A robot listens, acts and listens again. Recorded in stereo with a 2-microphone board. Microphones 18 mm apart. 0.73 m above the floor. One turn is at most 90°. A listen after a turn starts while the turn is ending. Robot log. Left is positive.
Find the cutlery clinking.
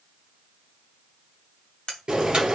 note: The cutlery clinking: about 60° left or 120° left.
cmd yaw +60
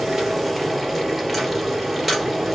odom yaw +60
cmd idle
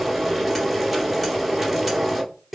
cmd idle
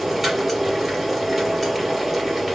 end: I heard cutlery clinking, but can't make it out now. It was about straight ahead or 60° left.